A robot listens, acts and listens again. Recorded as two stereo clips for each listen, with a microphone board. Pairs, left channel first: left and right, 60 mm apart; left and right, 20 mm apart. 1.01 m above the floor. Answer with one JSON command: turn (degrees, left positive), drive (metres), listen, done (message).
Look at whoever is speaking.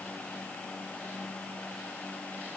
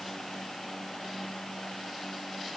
{"listen": true}
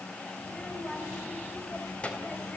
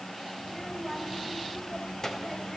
{"turn": 20}
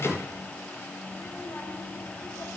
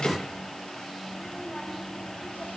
{"turn": 135}
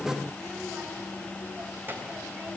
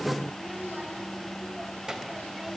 {"turn": -35}
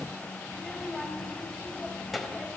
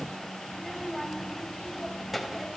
{"done": "Found it: a child speaking, straight ahead."}